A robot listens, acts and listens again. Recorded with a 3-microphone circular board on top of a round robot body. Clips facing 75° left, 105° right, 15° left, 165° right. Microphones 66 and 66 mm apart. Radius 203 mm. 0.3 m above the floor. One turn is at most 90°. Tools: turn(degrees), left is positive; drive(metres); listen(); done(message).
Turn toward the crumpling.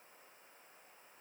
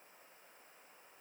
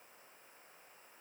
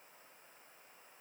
listen()
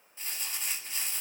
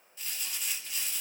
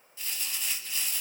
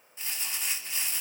turn(degrees=90)
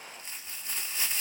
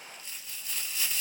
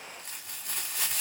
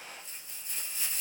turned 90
turn(degrees=20)
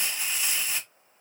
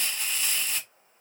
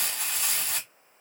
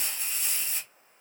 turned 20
done("Facing the crumpling.")